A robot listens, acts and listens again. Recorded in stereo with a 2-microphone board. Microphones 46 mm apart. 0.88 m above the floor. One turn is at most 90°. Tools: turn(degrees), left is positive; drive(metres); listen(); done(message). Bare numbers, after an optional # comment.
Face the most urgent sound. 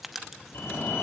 # The fire alarm: about 65° left or 115° left.
turn(65)
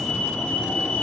# So it is at 20° left.
turn(20)
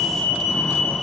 # The fire alarm is now 10° left.
turn(10)
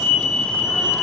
done("Found it: a fire alarm, straight ahead, 2 to 4 m away.")